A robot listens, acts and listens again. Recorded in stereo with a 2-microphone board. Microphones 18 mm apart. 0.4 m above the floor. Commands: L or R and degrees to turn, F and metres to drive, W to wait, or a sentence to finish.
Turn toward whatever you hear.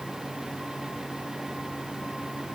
W
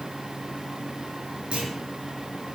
R70
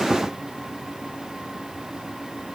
W
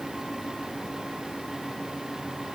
I heard a clunk, but can't make it out now. It was about straight ahead or 40° right.